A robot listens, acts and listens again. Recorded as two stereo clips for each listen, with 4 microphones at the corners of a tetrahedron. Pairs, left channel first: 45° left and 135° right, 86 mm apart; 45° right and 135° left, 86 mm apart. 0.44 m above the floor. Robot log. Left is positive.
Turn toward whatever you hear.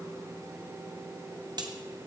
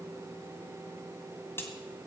note: The crack: 105° right.
cmd yaw -105
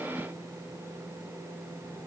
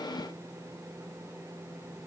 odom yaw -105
end: Facing where the crack came from. I can't hear it now.